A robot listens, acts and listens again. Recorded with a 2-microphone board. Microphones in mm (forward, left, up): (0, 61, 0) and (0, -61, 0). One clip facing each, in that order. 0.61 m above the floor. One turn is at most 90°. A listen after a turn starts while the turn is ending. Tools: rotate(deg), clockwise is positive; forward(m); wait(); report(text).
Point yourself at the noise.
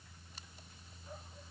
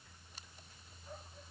wait()
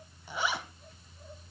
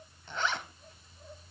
rotate(-30)
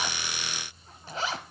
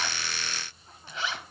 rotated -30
rotate(-90)
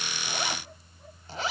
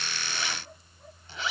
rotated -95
rotate(-45)
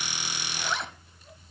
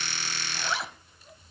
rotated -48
report("Found it: a zipper, straight ahead.")